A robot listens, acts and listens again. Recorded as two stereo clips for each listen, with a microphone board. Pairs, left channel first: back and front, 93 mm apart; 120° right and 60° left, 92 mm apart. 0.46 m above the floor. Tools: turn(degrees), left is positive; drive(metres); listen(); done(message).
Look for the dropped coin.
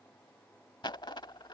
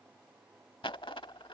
turn(degrees=-145)
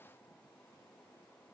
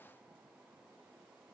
done("I heard a dropped coin from this way, but can't make it out now.")